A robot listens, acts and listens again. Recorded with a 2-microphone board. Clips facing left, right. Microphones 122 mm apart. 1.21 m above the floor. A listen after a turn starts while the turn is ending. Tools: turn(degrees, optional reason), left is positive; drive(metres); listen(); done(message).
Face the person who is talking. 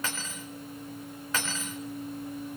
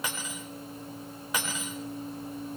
listen()
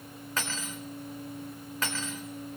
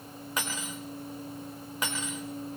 listen()
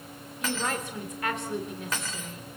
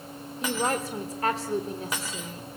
turn(degrees=-35, reason="The woman speaking: about 35° right or 145° right.")
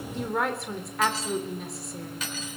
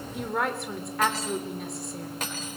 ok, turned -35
done("Found it: a woman speaking, straight ahead.")